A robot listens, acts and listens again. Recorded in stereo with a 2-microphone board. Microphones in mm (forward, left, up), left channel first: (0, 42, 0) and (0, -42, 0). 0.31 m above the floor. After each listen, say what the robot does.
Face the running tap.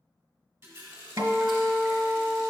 Turn 30° right.
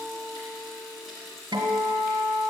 Facing the running tap, 1 to 2 m away.